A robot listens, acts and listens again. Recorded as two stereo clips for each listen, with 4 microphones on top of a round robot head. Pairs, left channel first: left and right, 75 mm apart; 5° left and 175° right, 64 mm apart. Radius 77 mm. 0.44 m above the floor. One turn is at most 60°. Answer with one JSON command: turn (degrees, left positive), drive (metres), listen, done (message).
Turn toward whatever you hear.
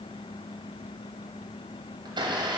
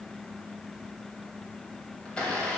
{"turn": -60}
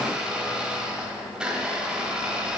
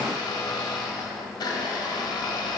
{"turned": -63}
{"turn": -10}
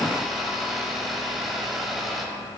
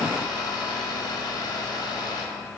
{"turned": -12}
{"done": "Found it: a blender, straight ahead, 1 to 2 m away."}